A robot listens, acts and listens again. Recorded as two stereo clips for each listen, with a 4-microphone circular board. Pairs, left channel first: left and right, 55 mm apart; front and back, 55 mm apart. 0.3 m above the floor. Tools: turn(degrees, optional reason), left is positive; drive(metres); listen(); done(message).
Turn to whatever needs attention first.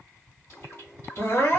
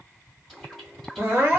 turn(degrees=130, reason="The crying: 130° left.")
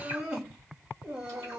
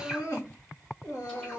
turn(degrees=-30, reason="The crying is now 30° right.")
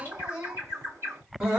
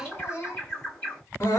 turn(degrees=-25, reason="The crying is now 25° right.")
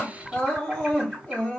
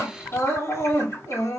turn(degrees=20, reason="The crying is now 20° left.")
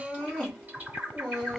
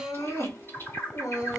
done("Found it: crying, straight ahead, 1 to 2 m away.")